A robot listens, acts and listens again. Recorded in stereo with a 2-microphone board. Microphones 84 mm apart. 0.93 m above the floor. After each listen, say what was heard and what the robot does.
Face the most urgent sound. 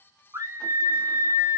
The scream: about 35° right or 145° right. Turn 35° right.
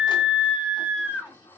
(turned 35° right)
So it is at 10° right. Turn 10° right.
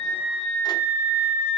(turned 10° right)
Facing the scream, under 1 m away.